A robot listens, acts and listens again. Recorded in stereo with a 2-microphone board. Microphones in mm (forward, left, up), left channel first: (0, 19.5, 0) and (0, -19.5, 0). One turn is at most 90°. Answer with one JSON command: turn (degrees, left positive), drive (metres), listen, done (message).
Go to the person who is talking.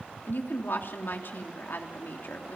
{"turn": 65}
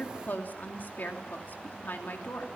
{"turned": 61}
{"turn": 55}
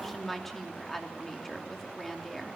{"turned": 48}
{"drive": 1.0}
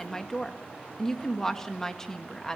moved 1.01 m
{"turn": 10}
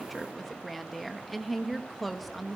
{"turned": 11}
{"drive": 1.0}
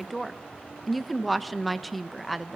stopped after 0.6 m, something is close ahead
{"done": "I am next to the woman speaking."}